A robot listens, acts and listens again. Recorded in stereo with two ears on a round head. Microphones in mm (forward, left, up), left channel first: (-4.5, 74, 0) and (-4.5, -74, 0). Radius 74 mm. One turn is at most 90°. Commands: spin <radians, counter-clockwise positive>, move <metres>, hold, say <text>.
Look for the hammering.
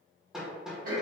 spin -0.52
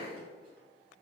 hold
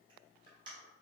hold
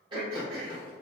say I heard hammering, but can't make it out now. It was about 25° left or 145° right.